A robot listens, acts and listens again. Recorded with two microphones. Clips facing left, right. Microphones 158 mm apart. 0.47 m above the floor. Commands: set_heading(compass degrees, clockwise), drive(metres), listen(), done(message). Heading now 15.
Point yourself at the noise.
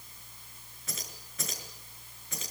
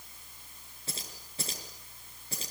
set_heading(50)
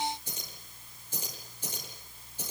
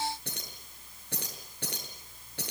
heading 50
set_heading(155)
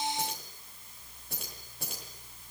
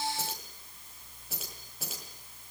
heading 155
done("Facing the keys jangling.")